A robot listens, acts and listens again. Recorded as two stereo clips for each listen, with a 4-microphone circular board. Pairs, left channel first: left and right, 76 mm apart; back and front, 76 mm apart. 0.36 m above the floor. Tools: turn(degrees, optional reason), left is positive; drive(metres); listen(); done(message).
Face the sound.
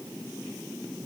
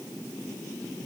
listen()
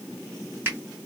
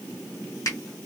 turn(degrees=-150, reason="The finger snap: 150° right.")
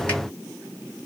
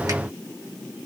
listen()
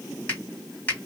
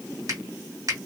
turn(degrees=25, reason="The finger snap is now 25° left.")
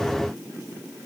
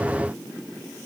listen()
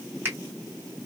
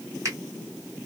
turn(degrees=-30, reason="The finger snap is now 30° right.")
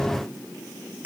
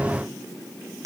turn(degrees=-25, reason="The finger snap is now 25° right.")
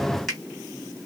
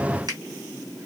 done("Facing the finger snap.")